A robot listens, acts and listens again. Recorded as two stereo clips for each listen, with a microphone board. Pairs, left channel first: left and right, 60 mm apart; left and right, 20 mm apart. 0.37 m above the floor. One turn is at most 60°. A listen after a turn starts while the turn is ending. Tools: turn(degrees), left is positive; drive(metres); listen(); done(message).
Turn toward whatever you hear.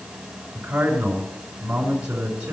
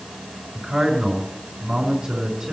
turn(degrees=-20)
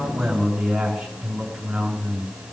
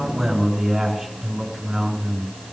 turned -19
done("Found it: a man speaking, straight ahead.")